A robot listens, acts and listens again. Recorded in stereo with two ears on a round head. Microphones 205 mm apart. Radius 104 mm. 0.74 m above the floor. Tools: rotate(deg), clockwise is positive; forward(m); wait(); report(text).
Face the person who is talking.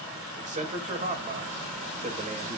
rotate(35)
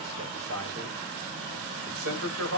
rotate(105)
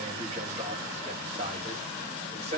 rotate(30)
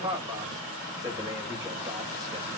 rotate(15)
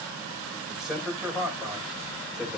report("Found it: a man speaking, straight ahead.")